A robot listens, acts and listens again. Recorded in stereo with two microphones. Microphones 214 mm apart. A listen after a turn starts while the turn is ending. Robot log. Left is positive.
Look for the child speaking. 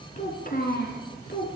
note: The child speaking: about 55° left or 125° left.
cmd yaw +55
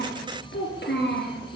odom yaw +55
note: So it is at 60° left.
cmd yaw +60
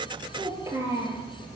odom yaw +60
note: The child speaking is now 15° right.
cmd yaw -15
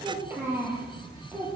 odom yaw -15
note: The child speaking is now 15° right.
cmd yaw -15
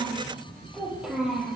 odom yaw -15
end: Facing the child speaking, over 4 m away.